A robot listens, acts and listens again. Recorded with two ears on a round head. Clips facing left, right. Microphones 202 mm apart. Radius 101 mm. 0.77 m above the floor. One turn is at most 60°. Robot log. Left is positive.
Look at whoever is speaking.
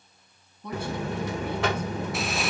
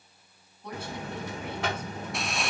cmd yaw +60
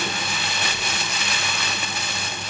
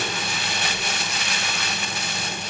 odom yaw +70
note: Nothing new. It was at 20° left.
cmd yaw +20
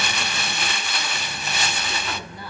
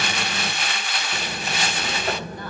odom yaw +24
cmd idle
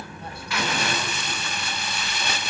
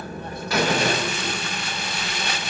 end: Facing where the woman speaking came from. I can't hear it now.